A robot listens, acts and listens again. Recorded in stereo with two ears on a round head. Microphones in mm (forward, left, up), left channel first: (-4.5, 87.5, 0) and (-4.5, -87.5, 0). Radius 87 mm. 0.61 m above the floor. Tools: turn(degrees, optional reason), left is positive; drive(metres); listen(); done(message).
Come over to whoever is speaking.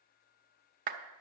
listen()
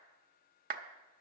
listen()
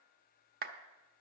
done("I can't make out anyone speaking, only a clap.")